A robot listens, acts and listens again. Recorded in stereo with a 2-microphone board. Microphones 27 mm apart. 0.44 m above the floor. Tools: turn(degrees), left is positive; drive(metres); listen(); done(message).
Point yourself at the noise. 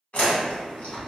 turn(degrees=55)
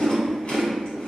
turn(degrees=55)
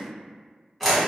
done("Found it: chewing, straight ahead.")